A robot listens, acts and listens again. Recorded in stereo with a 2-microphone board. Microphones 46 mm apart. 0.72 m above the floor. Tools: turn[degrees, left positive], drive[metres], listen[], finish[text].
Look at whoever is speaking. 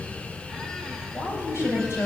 Action: turn[90]
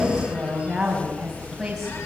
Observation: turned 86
Action: finish[Facing the woman speaking, over 4 m away.]